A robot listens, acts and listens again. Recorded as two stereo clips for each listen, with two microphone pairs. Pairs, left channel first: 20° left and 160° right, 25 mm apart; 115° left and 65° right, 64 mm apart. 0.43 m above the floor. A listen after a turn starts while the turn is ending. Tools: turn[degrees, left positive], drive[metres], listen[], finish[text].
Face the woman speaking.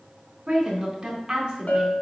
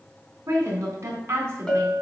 Thought: The woman speaking: 110° right.
Action: turn[-110]
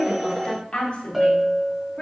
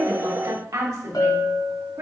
Thought: The woman speaking is now 30° right.
Action: turn[-30]
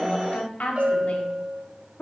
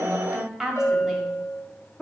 Thought: The woman speaking is now 30° left.
Action: turn[30]
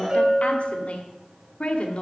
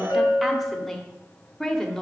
Thought: The woman speaking is now 30° left.
Action: turn[30]
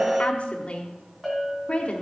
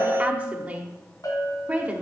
Action: finish[Facing the woman speaking.]